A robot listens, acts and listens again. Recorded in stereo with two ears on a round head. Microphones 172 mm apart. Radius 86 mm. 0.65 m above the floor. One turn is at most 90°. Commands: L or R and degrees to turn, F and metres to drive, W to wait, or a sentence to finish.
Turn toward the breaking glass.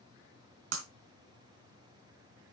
R70
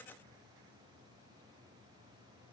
W
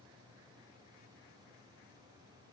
I heard breaking glass, but can't make it out now. It was about straight ahead or 40° right.